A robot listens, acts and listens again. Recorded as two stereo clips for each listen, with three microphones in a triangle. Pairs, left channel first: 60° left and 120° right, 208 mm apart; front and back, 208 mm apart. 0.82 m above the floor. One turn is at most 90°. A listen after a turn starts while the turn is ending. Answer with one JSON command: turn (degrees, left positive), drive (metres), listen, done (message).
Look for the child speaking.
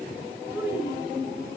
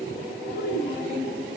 {"turn": -40}
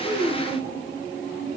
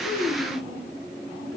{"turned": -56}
{"turn": 15}
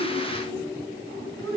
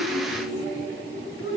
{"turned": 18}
{"turn": -10}
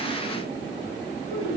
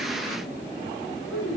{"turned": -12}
{"done": "Facing the child speaking."}